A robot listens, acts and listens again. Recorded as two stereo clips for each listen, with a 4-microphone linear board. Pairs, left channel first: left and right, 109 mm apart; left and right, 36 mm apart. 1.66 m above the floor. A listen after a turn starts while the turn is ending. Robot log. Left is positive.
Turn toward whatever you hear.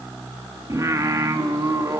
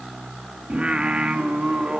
note: The singing: about 30° right or 150° right.
cmd yaw -30
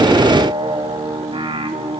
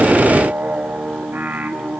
note: So it is at 120° right.
cmd yaw -120
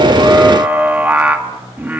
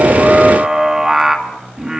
note: The singing is now 15° right.
cmd yaw -15
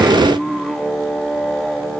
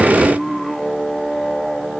end: Facing the singing, 2 to 4 m away.